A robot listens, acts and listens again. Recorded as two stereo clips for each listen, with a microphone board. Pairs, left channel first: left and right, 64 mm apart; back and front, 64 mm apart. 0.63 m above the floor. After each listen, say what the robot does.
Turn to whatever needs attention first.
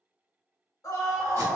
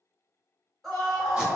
Turn 100° left.
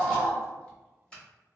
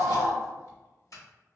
Turn 30° right.
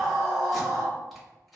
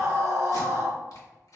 Turn 10° right.
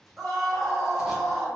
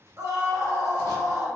Found it: a scream, straight ahead.